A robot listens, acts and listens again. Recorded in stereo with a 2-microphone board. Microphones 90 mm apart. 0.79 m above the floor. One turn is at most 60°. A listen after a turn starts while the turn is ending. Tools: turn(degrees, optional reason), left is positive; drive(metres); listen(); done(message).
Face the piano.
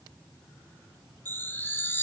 listen()
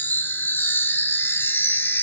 listen()
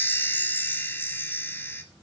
done("I can't make out a piano to turn to.")